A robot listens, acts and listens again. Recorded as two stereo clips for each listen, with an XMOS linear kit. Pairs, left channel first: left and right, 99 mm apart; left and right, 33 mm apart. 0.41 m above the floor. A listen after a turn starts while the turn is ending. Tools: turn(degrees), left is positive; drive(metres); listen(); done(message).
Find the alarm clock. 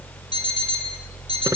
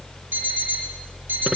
turn(degrees=-70)
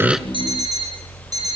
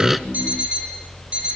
turn(degrees=-40)
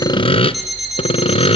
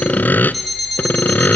done("Found it: an alarm clock, straight ahead.")